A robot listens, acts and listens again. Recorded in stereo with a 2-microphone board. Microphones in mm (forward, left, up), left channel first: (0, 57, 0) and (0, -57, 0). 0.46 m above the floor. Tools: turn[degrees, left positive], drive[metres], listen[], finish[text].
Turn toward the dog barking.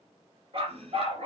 Thought: The dog barking: about 55° right or 125° right.
Action: turn[-55]
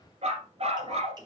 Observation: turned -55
Thought: So it is at 55° right.
Action: turn[-55]
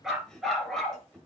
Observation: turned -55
Action: finish[Facing the dog barking, 2 to 4 m away.]